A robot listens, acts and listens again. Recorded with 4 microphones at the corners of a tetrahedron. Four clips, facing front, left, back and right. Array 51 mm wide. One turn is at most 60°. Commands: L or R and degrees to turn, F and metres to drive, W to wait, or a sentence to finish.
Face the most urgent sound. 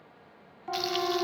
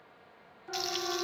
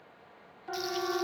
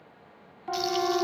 R60
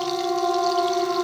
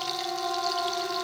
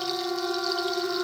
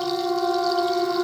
R15
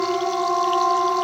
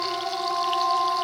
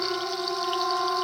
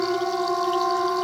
Found it: a siren, straight ahead.